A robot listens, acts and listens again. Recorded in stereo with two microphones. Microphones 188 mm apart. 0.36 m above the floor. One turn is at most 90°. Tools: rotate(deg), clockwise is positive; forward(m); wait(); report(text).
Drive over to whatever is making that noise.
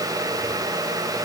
wait()
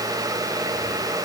wait()
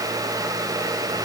report("I can't make out anything to turn to.")